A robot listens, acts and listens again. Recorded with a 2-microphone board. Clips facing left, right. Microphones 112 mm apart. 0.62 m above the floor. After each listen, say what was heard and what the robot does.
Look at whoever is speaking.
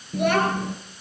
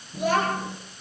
The child speaking: about 65° left or 115° left. Turn 65° left.
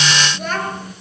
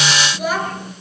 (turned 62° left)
So it is at 10° right. Turn 10° right.
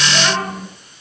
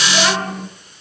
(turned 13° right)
Facing the child speaking, over 4 m away.